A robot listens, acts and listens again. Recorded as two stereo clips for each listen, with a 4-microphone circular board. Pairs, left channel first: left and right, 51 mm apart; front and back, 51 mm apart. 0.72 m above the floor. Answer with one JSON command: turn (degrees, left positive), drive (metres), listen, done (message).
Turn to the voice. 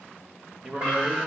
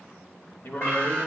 {"turn": -30}
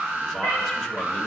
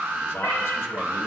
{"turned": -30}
{"listen": true}
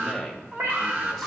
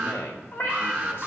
{"done": "Found it: a man speaking, straight ahead."}